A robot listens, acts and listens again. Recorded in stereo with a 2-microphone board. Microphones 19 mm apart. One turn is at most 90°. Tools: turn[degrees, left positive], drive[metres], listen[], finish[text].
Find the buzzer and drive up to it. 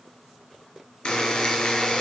Thought: The buzzer: about 50° left or 130° left.
Action: turn[50]
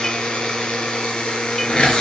Thought: So it is at 80° left.
Action: turn[80]
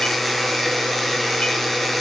Thought: The buzzer is now 10° left.
Action: turn[10]
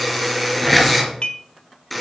Action: drive[1.0]
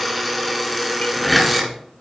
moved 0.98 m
Action: drive[1.0]
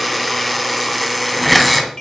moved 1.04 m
Action: drive[1.0]
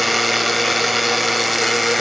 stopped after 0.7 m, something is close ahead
Action: finish[I am next to the buzzer.]